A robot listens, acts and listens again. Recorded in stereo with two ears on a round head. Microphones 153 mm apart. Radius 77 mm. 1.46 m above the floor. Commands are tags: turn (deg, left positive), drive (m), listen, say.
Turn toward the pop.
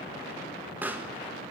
<turn deg="-30"/>
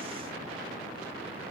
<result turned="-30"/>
<listen/>
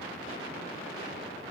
<say>I heard a pop, but can't make it out now. It was about 20° left or 140° right.</say>